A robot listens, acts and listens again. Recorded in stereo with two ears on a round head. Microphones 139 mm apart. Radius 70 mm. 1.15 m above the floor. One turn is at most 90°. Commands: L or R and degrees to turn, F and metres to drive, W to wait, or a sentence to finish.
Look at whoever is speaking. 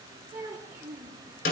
R15
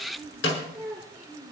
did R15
L30
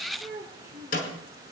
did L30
R20
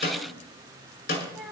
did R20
Facing the child speaking.